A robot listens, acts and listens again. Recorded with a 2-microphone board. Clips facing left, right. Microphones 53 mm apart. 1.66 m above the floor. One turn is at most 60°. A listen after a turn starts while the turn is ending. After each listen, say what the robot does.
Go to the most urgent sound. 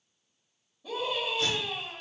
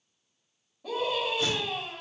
Turn 60° right.
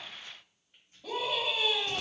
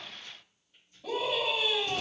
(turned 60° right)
Drive 1.0 m forward.
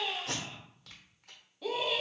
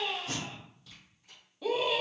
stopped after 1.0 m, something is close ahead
Arrived at the scream, straight ahead.